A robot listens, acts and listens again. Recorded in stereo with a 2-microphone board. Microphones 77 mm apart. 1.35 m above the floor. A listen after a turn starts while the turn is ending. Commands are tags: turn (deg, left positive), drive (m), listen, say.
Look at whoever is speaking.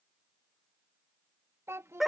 <turn deg="-35"/>
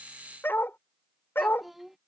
<say>Facing the child speaking.</say>